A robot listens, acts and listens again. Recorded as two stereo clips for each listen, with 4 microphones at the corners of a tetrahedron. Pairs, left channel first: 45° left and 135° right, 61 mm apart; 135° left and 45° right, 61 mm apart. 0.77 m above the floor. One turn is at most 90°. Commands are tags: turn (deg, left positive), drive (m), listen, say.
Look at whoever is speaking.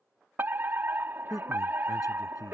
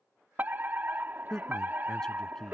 <turn deg="55"/>
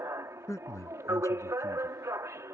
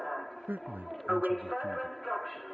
<turn deg="15"/>
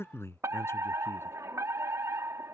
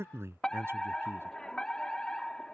<say>Found it: a man speaking, straight ahead.</say>